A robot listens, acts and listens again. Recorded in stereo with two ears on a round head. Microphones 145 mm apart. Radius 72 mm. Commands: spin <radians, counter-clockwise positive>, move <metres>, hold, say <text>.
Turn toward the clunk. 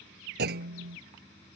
spin -1.22
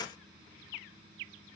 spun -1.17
hold
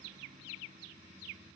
say I heard a clunk, but can't make it out now. It was about straight ahead or 45° right.